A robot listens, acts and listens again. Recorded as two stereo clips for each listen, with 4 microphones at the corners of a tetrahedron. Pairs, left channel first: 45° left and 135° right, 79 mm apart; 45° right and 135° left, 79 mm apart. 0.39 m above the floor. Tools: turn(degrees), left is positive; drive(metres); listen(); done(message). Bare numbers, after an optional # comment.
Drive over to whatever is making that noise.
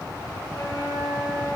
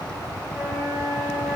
# The flute: 85° left.
turn(85)
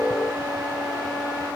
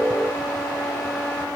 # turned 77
listen()
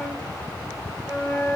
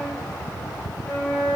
drive(1.0)
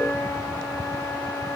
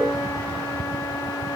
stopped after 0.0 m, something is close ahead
done("Blocked. The flute is further on, straight ahead.")